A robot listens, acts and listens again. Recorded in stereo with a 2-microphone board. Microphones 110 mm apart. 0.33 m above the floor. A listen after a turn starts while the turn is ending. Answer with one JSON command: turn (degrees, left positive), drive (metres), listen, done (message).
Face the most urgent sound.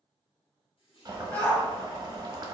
{"turn": 30}
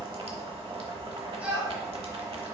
{"turn": -15}
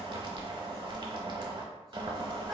{"listen": true}
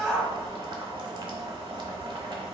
{"done": "Found it: a shout, straight ahead."}